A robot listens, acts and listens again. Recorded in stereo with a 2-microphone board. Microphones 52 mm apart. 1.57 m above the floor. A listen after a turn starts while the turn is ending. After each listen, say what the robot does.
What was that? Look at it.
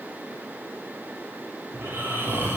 Turn 45° right.
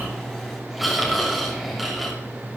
Found it: snoring, straight ahead, 2 to 4 m away.